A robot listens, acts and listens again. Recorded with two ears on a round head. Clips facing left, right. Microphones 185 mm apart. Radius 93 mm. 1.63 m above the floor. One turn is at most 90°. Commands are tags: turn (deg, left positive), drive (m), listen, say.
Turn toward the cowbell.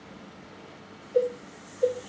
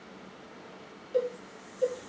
<turn deg="-45"/>
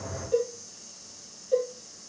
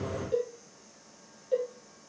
<say>Facing the cowbell.</say>